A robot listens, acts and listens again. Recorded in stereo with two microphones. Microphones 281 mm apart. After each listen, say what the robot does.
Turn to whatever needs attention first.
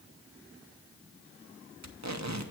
Keep listening.
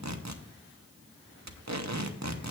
Keep listening.
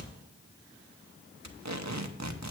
I can't make out anything urgent, only tape being pulled.